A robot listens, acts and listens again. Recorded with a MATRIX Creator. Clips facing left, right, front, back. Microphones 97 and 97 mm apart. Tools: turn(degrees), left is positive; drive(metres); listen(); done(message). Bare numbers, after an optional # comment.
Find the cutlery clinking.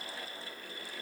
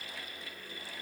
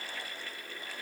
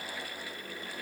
listen()
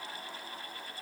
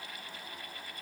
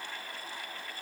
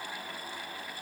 listen()
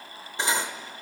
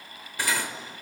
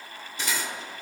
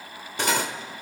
# The cutlery clinking: 155° left.
turn(155)
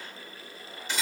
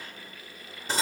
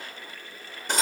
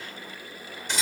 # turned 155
# The cutlery clinking is now 40° right.
turn(-40)
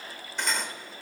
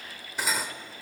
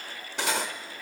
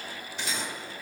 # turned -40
done("Facing the cutlery clinking.")